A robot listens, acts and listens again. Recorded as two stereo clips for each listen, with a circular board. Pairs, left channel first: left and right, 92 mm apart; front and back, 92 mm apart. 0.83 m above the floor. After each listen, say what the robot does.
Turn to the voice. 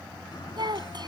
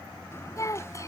Turn 55° right.
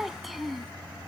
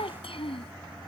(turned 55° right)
Keep listening.
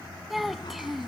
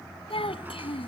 Found it: a child speaking, straight ahead.